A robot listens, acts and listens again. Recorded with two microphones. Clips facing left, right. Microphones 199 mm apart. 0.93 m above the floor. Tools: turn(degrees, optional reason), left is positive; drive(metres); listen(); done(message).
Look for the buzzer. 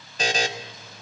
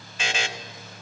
turn(degrees=40, reason="The buzzer: about 40° left or 140° left.")
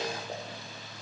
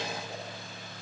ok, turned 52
listen()
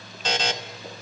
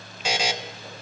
turn(degrees=-10, reason="So it is at 10° right.")
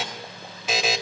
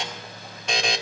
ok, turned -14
done("Facing the buzzer.")